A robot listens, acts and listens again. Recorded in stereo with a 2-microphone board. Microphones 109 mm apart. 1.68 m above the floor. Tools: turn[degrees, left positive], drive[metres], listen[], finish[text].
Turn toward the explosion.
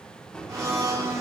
Action: turn[30]
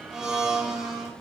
Action: listen[]
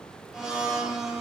Action: finish[I heard an explosion, but can't make it out now. It was about 20° right or 140° left.]